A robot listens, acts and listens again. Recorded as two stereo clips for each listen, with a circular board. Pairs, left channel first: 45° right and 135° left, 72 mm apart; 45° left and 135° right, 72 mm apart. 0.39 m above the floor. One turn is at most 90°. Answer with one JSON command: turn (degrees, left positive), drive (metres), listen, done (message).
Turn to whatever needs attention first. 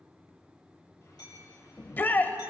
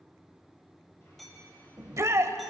{"turn": -90}
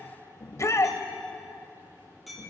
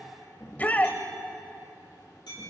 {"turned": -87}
{"turn": -15}
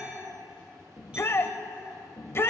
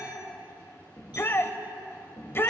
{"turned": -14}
{"done": "Found it: a shout, straight ahead, 1 to 2 m away."}